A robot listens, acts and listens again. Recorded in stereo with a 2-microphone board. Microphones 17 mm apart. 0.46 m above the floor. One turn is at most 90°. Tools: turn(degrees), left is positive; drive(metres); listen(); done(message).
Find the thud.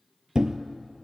turn(degrees=-50)
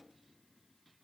listen()
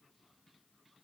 done("I heard a thud, but can't make it out now. It was about straight ahead or 80° right.")